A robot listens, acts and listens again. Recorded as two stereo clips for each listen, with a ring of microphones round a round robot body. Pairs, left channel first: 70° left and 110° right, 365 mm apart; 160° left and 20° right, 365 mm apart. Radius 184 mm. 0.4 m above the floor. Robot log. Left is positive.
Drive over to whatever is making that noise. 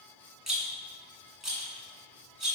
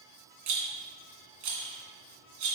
note: The rattle: 25° right.
cmd yaw -25
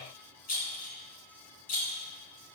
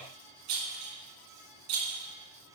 cmd fwd 1.0
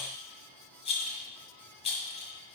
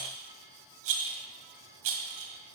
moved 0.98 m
cmd fwd 1.0
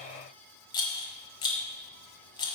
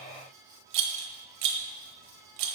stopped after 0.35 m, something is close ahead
note: The rattle is now 10° right.
cmd yaw -10
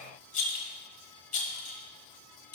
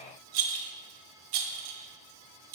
end: I am next to the rattle.